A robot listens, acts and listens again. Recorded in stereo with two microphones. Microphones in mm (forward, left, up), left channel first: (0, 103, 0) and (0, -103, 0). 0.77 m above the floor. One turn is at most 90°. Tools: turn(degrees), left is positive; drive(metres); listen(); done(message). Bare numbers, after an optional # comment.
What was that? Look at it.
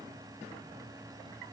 listen()
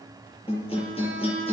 # The guitar: about 30° left or 150° left.
turn(30)
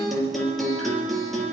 done("Facing the guitar, over 4 m away.")